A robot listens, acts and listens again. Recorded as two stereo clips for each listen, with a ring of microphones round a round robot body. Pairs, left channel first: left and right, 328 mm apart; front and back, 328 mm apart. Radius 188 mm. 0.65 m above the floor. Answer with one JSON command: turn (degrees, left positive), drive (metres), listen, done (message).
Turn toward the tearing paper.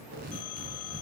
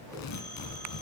{"turn": -20}
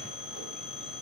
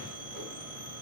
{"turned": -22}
{"listen": true}
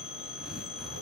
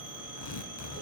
{"done": "Found it: tearing paper, straight ahead."}